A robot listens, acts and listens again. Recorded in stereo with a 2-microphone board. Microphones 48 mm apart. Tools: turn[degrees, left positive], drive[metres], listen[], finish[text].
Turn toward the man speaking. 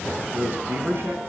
Thought: The man speaking: about 50° right or 130° right.
Action: turn[-50]
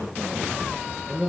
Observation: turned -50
Thought: So it is at 10° right.
Action: turn[-10]
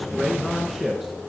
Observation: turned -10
Action: finish[Found it: a man speaking, straight ahead, over 4 m away.]